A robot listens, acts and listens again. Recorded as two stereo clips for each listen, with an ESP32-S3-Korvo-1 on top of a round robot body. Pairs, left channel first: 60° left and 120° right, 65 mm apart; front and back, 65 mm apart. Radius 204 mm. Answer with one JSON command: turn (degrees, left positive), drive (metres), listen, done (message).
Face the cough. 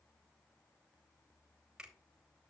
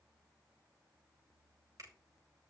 {"listen": true}
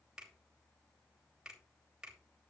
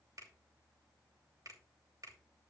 {"listen": true}
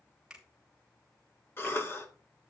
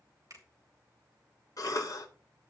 {"turn": 10}
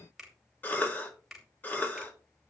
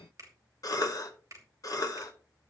{"done": "Found it: a cough, straight ahead."}